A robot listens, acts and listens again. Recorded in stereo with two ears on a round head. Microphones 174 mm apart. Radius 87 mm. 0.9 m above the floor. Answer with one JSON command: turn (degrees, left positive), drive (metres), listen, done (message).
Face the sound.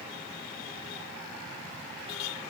{"listen": true}
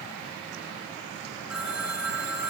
{"turn": -30}
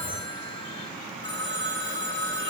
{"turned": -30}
{"turn": 25}
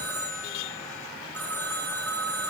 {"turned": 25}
{"turn": 10}
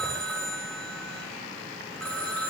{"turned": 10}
{"done": "Found it: a phone ringing, straight ahead, over 4 m away."}